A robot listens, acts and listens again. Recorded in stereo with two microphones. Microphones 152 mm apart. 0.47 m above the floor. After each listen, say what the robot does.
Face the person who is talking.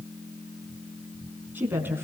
Turn 30° right.
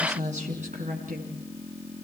Turn 120° right.
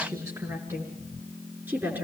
Turn 15° right.
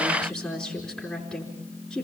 Facing the woman speaking.